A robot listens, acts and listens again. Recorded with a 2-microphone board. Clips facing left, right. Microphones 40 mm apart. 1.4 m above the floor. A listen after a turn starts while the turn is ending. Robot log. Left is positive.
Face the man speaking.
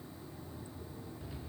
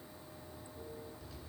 cmd idle
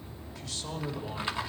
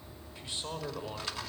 note: The man speaking: about 20° right or 160° right.
cmd yaw -20
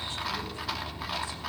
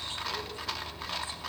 cmd idle
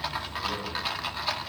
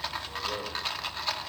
cmd idle
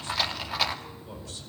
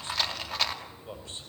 note: The man speaking: about 30° right or 150° right.
cmd yaw -30
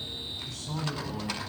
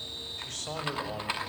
note: So it is at 120° right.
cmd yaw -120
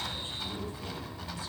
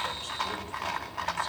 cmd idle
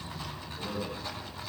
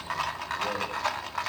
note: The man speaking is now 50° right.
cmd yaw -50
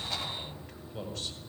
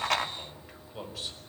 note: The man speaking is now 10° right.
cmd yaw -10
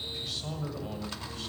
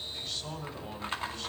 end: Facing the man speaking.